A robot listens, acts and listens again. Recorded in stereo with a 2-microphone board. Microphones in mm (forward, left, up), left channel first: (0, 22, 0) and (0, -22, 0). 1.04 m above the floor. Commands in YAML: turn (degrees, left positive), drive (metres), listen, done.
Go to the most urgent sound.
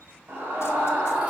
turn: -65
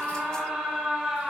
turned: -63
drive: 1.0
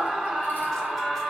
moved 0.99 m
turn: -10
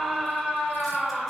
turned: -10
drive: 1.0
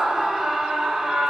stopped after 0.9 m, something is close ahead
turn: -10
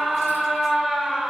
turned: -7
done: "Arrived at the scream, straight ahead."